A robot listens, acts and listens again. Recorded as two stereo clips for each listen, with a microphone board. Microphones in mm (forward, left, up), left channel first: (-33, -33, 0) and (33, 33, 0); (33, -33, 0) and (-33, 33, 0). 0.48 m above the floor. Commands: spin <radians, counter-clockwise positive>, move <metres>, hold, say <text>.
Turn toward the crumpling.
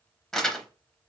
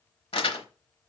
spin -0.87
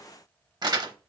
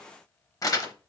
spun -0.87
say Facing the crumpling.